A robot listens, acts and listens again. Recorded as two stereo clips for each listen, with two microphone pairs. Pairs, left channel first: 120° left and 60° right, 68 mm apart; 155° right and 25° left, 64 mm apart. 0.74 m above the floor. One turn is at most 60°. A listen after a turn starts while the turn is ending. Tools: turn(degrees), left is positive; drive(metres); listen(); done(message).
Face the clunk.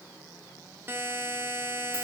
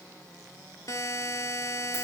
listen()
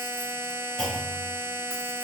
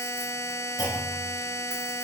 turn(degrees=-60)
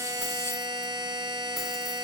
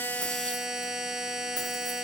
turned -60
turn(degrees=-60)
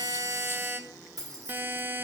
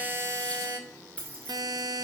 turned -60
turn(degrees=-40)
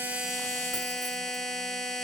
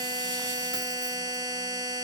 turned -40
done("Facing where the clunk came from. I can't hear it now.")